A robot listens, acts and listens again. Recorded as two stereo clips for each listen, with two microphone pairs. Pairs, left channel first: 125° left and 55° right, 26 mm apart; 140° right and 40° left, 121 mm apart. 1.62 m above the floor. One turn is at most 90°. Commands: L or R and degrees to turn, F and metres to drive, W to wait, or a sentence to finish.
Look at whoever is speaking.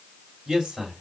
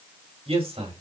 L10
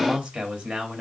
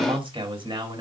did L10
Found it: a man speaking, straight ahead.